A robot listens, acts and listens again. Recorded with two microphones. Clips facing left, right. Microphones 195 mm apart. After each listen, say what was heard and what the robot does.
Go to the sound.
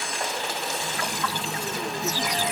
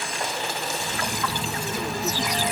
The phone buzzing: about 25° left or 155° left. Turn 25° left.
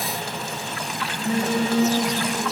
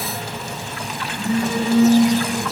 So it is at 130° left. Turn 130° left.
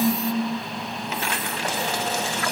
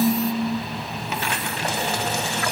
The phone buzzing is now 40° right. Turn 40° right.
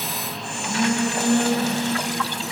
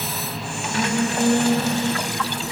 The phone buzzing is now 10° right. Turn 10° right.
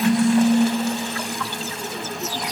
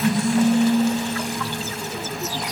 Drive 1.0 m forward.
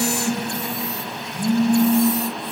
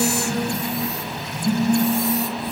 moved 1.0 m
Drive 1.0 m forward.
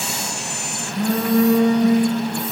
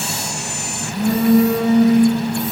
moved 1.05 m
The phone buzzing is now 10° right. Turn 10° right.
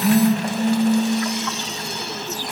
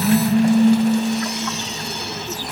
Drive 1.0 m forward.
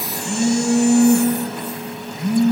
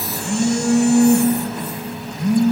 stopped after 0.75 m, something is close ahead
The phone buzzing is now 10° left. Turn 10° left.
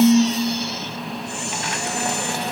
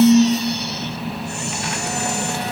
I am next to the phone buzzing.